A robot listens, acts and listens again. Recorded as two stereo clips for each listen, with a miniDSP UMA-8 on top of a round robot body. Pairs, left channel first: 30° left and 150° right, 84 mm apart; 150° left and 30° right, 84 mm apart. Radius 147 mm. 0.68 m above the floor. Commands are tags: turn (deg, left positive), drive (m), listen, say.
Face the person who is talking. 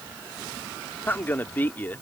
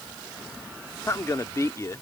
<turn deg="95"/>
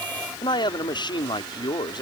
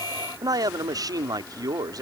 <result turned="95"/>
<turn deg="10"/>
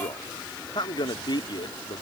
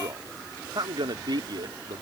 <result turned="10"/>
<say>Facing the man speaking.</say>